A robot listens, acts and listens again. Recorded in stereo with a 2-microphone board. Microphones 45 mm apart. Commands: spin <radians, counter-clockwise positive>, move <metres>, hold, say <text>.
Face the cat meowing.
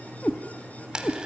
spin 0.79
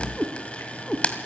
spin 0.17
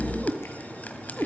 say Facing the cat meowing, 2 to 4 m away.